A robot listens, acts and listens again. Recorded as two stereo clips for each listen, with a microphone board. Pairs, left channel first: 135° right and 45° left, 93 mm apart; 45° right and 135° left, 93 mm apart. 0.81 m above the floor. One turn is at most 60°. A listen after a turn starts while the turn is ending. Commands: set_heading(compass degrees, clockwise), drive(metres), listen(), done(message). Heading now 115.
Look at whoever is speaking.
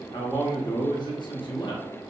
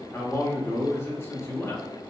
set_heading(175)
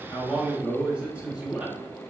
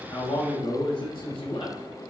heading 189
set_heading(219)
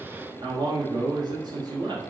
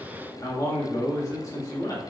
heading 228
done("Facing the man speaking.")